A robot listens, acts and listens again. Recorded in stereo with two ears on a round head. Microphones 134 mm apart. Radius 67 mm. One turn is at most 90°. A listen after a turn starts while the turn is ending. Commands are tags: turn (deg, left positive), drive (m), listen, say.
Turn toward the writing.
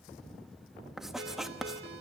<turn deg="30"/>
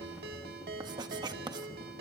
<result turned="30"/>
<turn deg="-30"/>
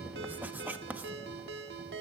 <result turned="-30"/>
<turn deg="-10"/>
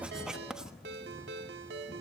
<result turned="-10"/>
<say>Facing the writing, 1 to 2 m away.</say>